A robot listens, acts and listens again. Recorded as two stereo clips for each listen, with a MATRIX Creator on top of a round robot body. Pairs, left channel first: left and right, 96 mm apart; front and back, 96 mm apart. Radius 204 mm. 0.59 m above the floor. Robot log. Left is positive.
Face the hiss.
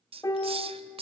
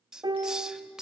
note: The hiss: 100° right.
cmd yaw -100
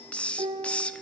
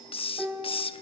note: The hiss is now 10° left.
cmd yaw +10
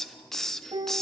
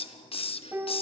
end: Facing the hiss.